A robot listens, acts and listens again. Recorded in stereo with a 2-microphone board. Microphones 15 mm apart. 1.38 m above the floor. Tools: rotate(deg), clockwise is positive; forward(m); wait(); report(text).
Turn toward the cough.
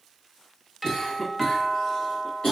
rotate(-55)
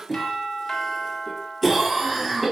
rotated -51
report("Facing the cough.")